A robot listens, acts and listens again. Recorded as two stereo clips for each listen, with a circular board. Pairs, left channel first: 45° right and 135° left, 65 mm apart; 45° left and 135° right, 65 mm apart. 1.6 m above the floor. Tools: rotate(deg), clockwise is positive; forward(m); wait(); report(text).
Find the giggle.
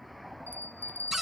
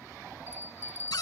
wait()
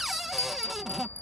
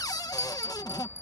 wait()
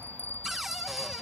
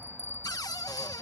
report("I can't make out a giggle, only a bell and a cupboard door.")